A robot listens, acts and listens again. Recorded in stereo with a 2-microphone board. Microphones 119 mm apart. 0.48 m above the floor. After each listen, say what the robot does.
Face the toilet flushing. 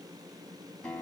Keep listening.
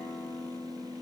Keep listening.
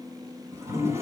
Turn 25° right.
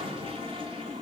Turn 130° right.
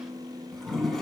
Found it: a toilet flushing, straight ahead, over 4 m away.